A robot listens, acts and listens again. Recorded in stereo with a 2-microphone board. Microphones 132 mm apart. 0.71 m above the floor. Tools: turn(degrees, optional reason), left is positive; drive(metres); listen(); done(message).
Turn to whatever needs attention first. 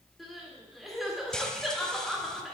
turn(degrees=30)
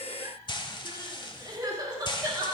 turn(degrees=-35, reason="So it is at 35° right.")
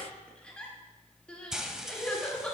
turn(degrees=10, reason="The crying is now 10° left.")
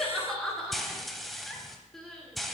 done("Facing the crying.")